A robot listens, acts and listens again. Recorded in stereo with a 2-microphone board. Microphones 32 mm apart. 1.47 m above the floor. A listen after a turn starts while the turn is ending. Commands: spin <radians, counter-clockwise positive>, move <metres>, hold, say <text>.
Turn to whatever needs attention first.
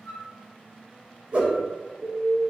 spin -0.52
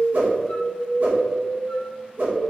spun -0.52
spin -2.44
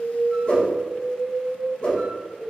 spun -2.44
say Facing the alarm, 1 to 2 m away.